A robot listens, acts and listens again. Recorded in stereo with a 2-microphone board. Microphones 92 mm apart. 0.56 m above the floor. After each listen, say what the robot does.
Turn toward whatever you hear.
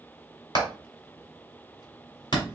Turn 55° left.
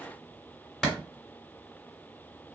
Found it: hammering, straight ahead.